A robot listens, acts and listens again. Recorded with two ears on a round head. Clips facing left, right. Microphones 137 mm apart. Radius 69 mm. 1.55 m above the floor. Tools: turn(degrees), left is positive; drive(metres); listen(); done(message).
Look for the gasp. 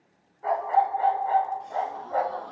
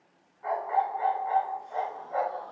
turn(degrees=90)
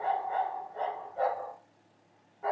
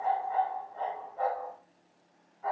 done("Facing where the gasp came from. I can't hear it now.")